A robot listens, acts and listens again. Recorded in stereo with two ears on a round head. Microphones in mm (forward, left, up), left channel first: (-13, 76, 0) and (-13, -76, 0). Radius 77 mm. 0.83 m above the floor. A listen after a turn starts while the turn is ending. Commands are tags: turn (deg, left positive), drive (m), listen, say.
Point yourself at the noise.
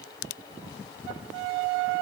<listen/>
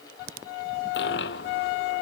<turn deg="65"/>
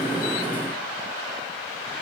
<listen/>
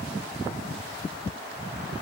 <say>I heard a dropped coin, but can't make it out now. It was about straight ahead or 50° left.</say>